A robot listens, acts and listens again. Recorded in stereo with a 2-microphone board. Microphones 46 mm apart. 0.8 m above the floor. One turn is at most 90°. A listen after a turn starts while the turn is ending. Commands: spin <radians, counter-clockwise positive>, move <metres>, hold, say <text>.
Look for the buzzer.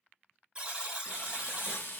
spin -0.26
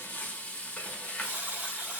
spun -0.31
spin -1.57
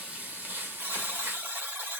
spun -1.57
spin -0.96
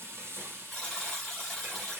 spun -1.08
say Facing the buzzer.